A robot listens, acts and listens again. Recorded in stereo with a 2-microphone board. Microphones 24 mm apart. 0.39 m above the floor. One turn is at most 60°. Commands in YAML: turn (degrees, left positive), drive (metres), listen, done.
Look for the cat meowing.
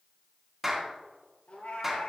turn: 55
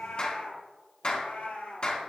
turn: 60
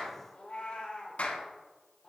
turn: 55
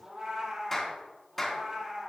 turn: -20
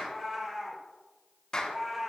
done: "Found it: a cat meowing, straight ahead."